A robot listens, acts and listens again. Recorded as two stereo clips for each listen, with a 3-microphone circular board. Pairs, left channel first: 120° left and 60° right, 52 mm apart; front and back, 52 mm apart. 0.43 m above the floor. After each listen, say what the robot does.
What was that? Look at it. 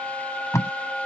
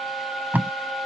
Turn 125° left.
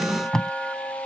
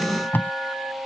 Turn 40° left.
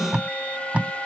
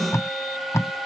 Found it: tape being pulled, straight ahead.